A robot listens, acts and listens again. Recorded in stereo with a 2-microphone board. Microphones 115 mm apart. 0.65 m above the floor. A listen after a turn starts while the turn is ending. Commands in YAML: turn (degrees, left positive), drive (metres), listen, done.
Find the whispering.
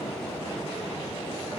listen: true
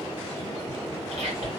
turn: -65
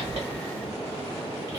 listen: true
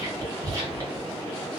turn: -30
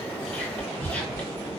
turn: 15
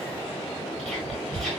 done: "Found it: whispering, straight ahead, 1 to 2 m away."